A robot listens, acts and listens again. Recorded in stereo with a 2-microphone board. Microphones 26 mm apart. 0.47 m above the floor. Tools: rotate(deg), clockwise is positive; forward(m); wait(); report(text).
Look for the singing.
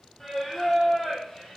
rotate(-30)
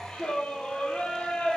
rotate(-125)
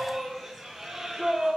rotate(25)
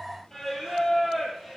report("Found it: singing, straight ahead.")